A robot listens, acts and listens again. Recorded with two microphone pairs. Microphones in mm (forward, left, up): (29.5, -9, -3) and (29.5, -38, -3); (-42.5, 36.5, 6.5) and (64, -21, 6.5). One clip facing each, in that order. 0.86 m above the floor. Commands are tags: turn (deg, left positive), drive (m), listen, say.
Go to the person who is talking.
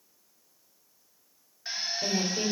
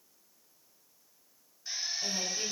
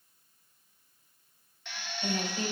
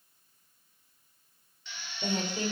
<turn deg="15"/>
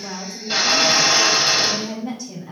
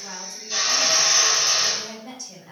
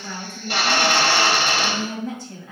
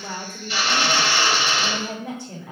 <drive m="1.0"/>
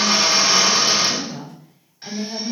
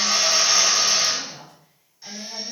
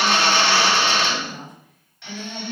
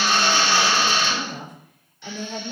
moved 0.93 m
<drive m="1.0"/>
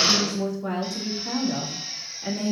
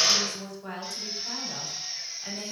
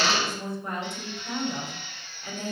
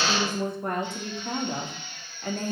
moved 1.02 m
<drive m="1.0"/>
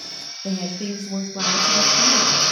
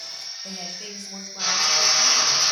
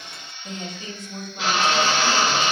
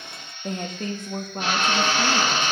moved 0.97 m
<drive m="1.0"/>
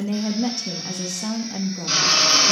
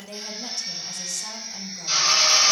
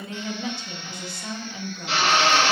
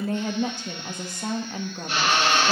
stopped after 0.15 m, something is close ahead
<turn deg="10"/>
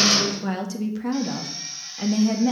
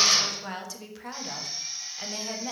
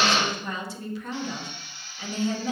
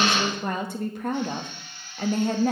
<say>I am next to the woman speaking.</say>